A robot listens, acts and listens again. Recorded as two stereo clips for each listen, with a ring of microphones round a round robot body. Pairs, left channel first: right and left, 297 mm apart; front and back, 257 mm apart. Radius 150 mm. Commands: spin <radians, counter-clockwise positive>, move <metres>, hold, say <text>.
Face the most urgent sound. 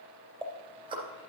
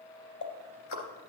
hold
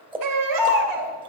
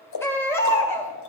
spin 1.40
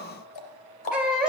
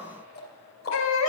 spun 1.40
say Found it: a baby crying, straight ahead.